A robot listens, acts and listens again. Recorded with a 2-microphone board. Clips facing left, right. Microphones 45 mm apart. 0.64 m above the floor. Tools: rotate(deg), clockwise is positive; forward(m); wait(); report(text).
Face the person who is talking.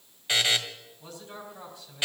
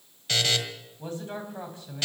rotate(30)
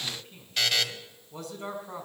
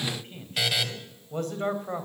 rotate(125)
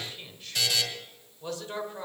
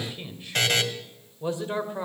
rotate(25)
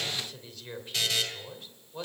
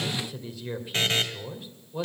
report("Facing the man speaking, 2 to 4 m away.")